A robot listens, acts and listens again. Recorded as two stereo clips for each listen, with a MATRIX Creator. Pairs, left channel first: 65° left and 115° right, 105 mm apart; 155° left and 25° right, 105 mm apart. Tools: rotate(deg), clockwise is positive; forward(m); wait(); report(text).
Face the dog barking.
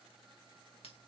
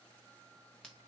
wait()
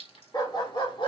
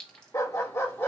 rotate(-95)
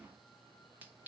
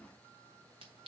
wait()
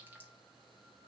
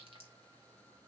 wait()
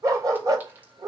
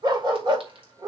rotate(65)
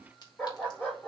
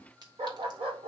rotate(10)
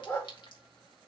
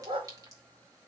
report("Facing the dog barking, 2 to 4 m away.")